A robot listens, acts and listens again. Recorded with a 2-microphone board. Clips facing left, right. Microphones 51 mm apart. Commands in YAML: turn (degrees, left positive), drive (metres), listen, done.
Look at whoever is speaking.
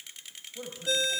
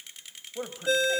turn: -40
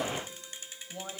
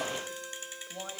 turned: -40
done: "Facing the man speaking, 2 to 4 m away."